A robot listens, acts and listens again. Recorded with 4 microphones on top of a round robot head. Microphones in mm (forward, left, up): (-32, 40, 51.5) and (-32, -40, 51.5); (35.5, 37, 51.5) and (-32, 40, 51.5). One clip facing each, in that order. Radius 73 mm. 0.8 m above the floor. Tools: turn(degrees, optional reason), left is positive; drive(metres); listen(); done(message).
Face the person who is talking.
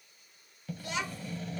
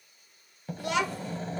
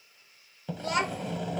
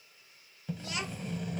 turn(degrees=-55, reason="The child speaking: 55° right.")
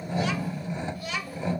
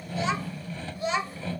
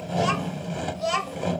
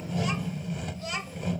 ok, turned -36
turn(degrees=-20, reason="The child speaking is now 20° right.")
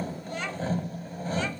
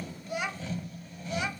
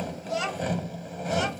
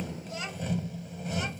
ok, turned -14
turn(degrees=-10, reason="The child speaking is now 10° right.")
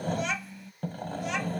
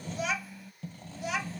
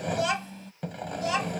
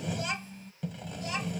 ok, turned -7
done("Facing the child speaking.")